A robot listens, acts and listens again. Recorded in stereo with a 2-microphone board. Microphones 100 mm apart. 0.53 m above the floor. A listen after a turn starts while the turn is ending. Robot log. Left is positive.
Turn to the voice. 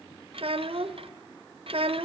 note: The child speaking: about 65° right or 115° right.
cmd yaw -65
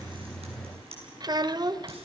note: So it is at 45° right.
cmd yaw -45
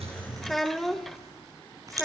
end: Found it: a child speaking, straight ahead.